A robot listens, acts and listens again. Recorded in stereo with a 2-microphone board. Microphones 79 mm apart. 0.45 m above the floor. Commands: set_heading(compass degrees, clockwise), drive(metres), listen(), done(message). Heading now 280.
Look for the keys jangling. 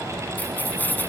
set_heading(255)
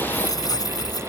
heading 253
set_heading(128)
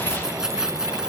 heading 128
set_heading(138)
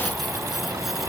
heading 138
listen()
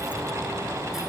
listen()
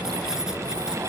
done("I heard keys jangling from this way, but can't make it out now.")